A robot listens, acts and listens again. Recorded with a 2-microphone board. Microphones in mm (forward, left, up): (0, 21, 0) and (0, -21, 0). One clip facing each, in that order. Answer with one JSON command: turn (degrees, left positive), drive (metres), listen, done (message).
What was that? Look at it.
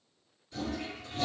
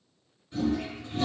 {"turn": -25}
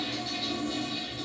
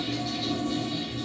{"done": "Found it: a toilet flushing, straight ahead."}